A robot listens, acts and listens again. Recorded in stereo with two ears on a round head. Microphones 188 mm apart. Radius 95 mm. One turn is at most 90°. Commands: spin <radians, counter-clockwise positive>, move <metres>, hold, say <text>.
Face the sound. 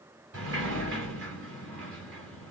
spin -1.05
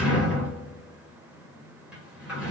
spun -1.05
say Facing the sliding door.